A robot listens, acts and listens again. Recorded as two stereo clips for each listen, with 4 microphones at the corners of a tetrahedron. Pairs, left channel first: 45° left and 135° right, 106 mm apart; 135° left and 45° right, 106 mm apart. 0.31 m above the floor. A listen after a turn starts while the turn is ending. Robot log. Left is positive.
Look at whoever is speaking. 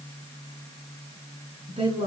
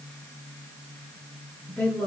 note: The woman speaking: 150° right.
cmd yaw -150
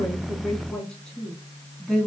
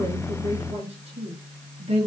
note: The woman speaking is now 45° right.
cmd yaw -45
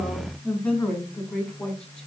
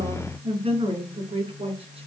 note: The woman speaking is now 35° right.
cmd yaw -35
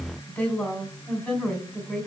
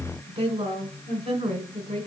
note: The woman speaking is now 30° right.
cmd yaw -30
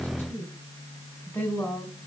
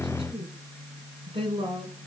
note: The woman speaking is now 25° right.
cmd yaw -25
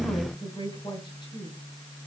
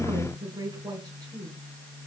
end: Facing the woman speaking.